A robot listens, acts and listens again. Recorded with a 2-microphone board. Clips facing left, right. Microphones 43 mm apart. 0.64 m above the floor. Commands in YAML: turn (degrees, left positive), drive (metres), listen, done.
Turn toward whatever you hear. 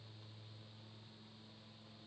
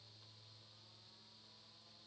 listen: true
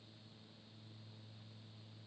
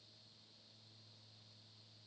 listen: true
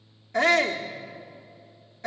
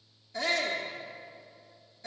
turn: 55
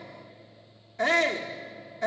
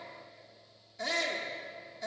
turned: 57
turn: 55
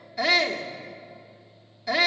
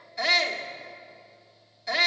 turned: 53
done: "Facing the shout."